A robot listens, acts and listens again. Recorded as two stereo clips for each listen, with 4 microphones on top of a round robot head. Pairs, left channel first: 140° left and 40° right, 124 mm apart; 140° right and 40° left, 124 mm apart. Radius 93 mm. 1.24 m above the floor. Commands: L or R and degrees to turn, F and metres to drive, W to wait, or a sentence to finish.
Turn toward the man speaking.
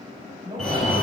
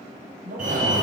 L20
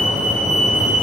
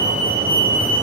W
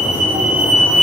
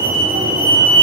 W
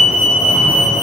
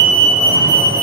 Facing where the man speaking came from. I can't hear it now.